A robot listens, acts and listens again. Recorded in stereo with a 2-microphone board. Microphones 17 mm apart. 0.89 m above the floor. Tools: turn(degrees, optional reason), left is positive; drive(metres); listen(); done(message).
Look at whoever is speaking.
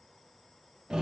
listen()
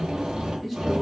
turn(degrees=-30)
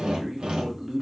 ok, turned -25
turn(degrees=-145, reason="So it is at 145° right.")
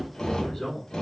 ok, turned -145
turn(degrees=35, reason="The man speaking is now 35° left.")
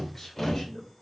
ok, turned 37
turn(degrees=25, reason="The man speaking is now 25° left.")
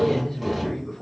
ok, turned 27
done("Found it: a man speaking, straight ahead.")